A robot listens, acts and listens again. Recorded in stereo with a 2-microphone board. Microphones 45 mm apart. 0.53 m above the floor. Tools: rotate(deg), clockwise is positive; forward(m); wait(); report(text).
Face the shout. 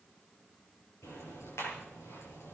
wait()
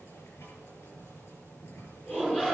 rotate(-20)
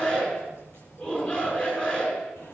rotate(-140)
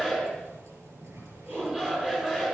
rotate(20)
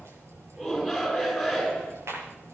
report("Facing the shout, over 4 m away.")